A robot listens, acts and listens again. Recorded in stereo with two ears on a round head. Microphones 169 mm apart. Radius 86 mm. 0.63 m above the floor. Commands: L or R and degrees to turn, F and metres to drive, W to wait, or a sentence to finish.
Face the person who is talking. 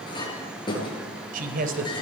R50
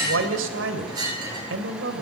R80
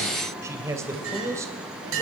R15
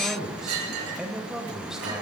Facing the man speaking.